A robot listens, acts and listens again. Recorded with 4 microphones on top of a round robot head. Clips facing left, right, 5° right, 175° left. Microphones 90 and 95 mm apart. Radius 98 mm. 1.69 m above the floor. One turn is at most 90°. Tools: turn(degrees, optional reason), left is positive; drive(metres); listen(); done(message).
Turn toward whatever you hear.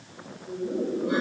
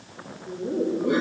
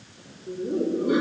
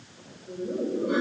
turn(degrees=-40, reason="The laughter: 40° right.")
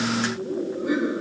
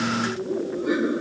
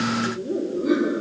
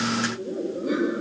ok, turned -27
done("Facing the laughter.")